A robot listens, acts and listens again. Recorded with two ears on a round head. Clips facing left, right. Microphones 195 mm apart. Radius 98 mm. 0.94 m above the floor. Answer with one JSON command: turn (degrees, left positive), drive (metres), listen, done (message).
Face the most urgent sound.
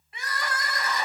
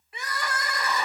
{"turn": -75}
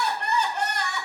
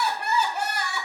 {"done": "Facing the crying."}